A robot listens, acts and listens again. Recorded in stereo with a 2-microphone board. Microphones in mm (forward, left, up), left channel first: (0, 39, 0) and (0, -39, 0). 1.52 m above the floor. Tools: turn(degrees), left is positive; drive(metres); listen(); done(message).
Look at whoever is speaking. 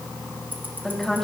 turn(degrees=30)
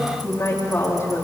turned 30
turn(degrees=145)
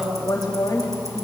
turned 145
turn(degrees=60)
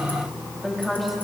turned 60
done("Found it: a woman speaking, straight ahead, 2 to 4 m away.")